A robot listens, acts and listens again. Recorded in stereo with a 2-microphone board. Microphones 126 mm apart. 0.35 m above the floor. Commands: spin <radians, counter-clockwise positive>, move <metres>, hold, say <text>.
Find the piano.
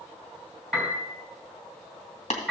spin -0.52
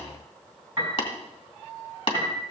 spin -2.44
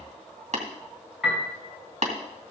say Facing the piano.